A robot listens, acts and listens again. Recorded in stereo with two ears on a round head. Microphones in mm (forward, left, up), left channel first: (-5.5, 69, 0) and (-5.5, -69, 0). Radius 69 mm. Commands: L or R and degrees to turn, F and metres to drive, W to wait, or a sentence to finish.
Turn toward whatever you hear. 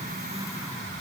W
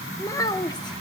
L25
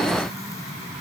W
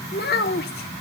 L110
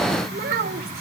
R60
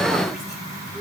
W
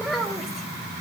Found it: a child speaking, straight ahead, 2 to 4 m away.